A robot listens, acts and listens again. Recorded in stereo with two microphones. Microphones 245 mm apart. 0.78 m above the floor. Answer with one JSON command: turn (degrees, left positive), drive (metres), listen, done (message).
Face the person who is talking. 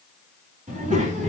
{"turn": -30}
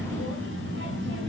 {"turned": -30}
{"turn": -130}
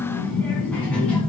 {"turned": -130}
{"done": "Facing the child speaking."}